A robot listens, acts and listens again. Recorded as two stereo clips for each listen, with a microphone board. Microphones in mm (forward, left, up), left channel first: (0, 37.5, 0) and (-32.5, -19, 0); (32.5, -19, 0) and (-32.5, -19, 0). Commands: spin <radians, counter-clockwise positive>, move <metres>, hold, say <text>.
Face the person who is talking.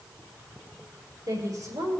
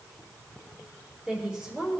spin -1.83
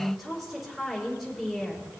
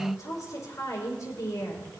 spin -0.61
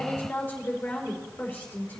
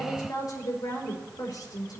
say Facing the woman speaking, over 4 m away.